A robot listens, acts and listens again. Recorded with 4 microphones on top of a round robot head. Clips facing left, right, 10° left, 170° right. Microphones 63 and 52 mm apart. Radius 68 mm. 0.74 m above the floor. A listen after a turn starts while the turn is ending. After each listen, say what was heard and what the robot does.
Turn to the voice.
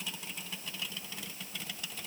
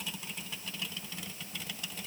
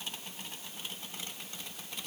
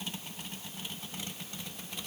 Keep listening.
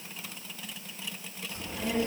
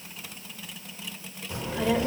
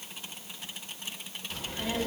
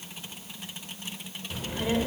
The child speaking: 95° right. Turn 95° right.
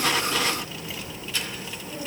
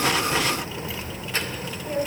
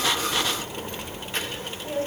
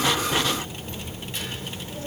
The child speaking is now 45° right. Turn 45° right.
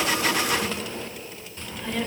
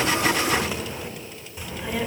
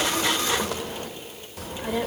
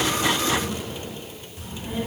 The child speaking is now 10° right. Turn 10° right.
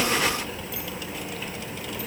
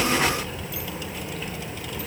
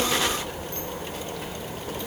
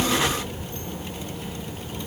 Facing the child speaking.